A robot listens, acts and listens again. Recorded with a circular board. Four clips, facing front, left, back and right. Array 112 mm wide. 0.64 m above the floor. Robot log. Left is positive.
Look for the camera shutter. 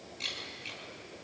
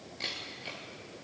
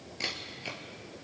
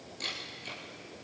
note: The camera shutter: 165° left.
cmd yaw +165
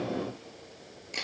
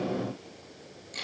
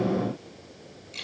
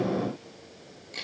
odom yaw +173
end: Found it: a camera shutter, straight ahead, 2 to 4 m away.